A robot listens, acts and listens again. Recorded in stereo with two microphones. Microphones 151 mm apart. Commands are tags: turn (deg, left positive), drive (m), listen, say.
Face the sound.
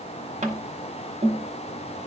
<turn deg="-50"/>
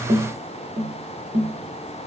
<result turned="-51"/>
<turn deg="-70"/>
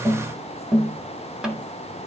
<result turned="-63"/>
<say>Found it: tapping, straight ahead, 1 to 2 m away.</say>